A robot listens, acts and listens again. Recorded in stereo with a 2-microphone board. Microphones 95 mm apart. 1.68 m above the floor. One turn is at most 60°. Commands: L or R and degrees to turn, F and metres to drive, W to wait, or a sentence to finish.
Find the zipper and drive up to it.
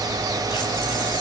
W
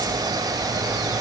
W
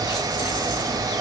I can't make out a zipper.